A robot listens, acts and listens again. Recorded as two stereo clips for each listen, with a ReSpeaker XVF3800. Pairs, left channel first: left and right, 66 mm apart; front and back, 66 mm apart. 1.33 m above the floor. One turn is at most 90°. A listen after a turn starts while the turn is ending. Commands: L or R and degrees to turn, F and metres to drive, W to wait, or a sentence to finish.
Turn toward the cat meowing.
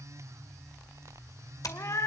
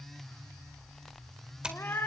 L55
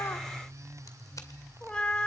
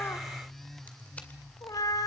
L15
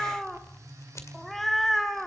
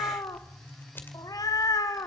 Facing the cat meowing, 1 to 2 m away.